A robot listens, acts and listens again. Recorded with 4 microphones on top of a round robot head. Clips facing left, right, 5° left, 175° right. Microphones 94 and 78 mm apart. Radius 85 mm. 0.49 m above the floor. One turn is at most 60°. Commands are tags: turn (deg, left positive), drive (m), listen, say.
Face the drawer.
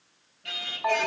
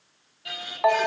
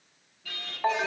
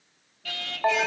<listen/>
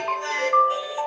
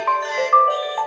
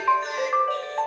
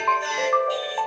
<listen/>
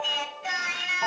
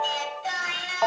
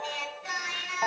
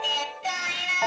<say>I can't make out a drawer, only singing and a ringtone.</say>